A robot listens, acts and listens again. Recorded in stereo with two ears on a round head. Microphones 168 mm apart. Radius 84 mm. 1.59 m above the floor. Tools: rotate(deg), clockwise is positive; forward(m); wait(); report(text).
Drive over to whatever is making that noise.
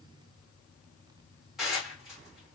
rotate(-30)
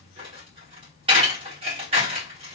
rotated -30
rotate(30)
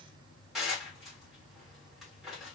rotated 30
forward(1.0)
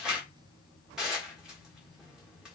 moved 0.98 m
forward(1.0)
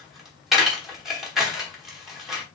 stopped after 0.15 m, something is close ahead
report("Arrived at the dishes clattering, straight ahead.")